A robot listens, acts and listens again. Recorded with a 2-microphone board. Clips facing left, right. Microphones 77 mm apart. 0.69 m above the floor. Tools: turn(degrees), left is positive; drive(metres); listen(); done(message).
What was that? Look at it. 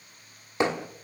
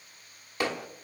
turn(degrees=25)
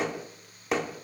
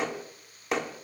done("Facing the hammering, 1 to 2 m away.")